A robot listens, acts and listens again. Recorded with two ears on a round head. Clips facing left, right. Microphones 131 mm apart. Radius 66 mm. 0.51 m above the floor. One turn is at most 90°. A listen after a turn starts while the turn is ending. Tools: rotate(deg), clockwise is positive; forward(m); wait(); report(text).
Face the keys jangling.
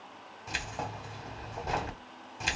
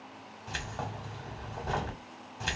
rotate(-30)
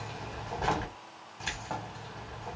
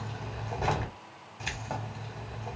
rotate(15)
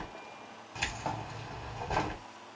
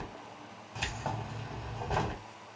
report("Facing the keys jangling.")